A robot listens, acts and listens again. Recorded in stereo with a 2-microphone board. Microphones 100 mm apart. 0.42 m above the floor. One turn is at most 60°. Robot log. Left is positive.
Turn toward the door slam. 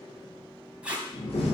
cmd yaw +60
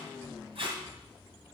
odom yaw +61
note: Nothing new. It was at 30° left.
cmd yaw +30
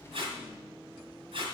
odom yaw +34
end: Facing where the door slam came from. I can't hear it now.